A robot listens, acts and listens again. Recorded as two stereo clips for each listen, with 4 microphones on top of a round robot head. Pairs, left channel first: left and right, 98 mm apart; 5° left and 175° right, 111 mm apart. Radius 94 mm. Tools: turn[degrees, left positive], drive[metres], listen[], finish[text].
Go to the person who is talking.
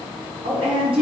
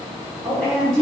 Thought: The woman speaking: 80° right.
Action: turn[-80]
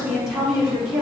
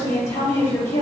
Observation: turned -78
Action: drive[1.0]
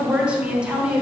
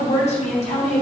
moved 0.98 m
Thought: The woman speaking is now 10° right.
Action: turn[-10]
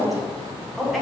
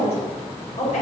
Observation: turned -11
Action: drive[1.0]
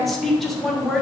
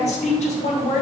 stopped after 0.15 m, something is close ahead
Action: finish[Arrived at the woman speaking, straight ahead.]